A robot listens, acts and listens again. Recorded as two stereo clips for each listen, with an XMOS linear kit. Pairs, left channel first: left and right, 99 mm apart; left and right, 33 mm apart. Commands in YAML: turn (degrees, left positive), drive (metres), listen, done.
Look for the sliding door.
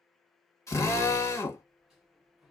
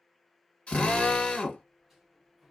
turn: -30
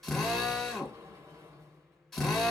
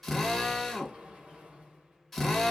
turn: -145
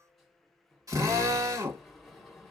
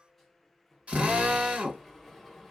done: "Found it: a sliding door, straight ahead, 1 to 2 m away."